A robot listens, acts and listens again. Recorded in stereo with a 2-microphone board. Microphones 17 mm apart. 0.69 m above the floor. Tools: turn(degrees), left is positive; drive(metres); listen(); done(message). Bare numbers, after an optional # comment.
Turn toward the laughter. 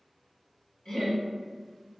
# The laughter: about 70° left or 110° left.
turn(70)
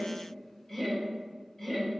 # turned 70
# So it is at 25° left.
turn(25)
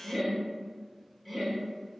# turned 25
done("Facing the laughter.")